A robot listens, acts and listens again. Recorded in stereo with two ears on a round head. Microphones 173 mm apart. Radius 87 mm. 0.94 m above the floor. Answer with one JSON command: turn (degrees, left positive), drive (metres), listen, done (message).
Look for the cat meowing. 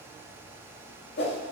{"listen": true}
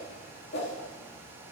{"listen": true}
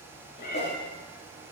{"turn": 50}
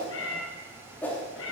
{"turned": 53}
{"turn": 75}
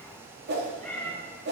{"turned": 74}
{"done": "Found it: a cat meowing, straight ahead."}